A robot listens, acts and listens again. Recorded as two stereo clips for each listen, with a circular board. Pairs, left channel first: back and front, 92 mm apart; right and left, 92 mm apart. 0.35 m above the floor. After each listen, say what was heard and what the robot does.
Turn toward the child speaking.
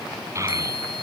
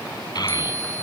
The child speaking: 55° right. Turn 55° right.
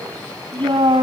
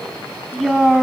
Found it: a child speaking, straight ahead, 2 to 4 m away.